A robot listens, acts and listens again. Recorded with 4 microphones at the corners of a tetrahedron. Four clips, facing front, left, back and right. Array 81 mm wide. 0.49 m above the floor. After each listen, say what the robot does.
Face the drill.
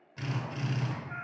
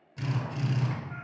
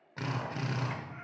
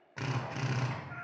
Turn 125° right.
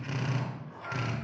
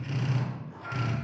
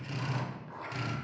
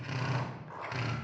Turn 40° right.
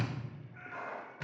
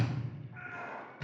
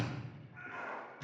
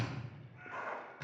Facing the drill.